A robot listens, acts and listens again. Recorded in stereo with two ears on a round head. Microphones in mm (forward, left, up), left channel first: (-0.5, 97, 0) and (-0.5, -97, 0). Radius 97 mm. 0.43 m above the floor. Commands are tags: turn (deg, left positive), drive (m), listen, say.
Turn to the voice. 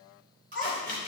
<turn deg="30"/>
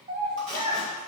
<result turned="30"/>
<turn deg="-35"/>
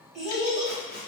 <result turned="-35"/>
<say>Facing the child speaking, 2 to 4 m away.</say>